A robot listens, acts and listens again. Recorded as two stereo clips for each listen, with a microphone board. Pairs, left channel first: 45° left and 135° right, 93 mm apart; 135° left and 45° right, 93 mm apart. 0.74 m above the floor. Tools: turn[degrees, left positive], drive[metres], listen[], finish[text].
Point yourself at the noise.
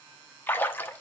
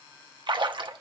Thought: The splash: 20° right.
Action: turn[-20]
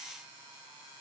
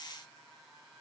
Action: finish[I heard a splash from this way, but can't make it out now.]